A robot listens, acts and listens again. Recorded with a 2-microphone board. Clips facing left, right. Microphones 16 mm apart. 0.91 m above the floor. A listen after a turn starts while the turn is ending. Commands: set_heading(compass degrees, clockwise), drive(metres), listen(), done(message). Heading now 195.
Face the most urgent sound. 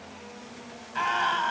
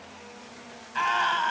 set_heading(165)
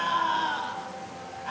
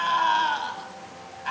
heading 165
set_heading(190)
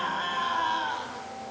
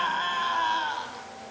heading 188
done("Facing the scream.")